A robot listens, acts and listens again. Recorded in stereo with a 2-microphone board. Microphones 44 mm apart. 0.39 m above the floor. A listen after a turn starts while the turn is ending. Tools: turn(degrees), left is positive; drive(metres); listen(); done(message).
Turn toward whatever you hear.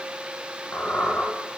turn(degrees=50)
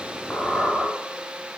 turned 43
turn(degrees=15)
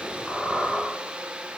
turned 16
done("Found it: a squeak, straight ahead.")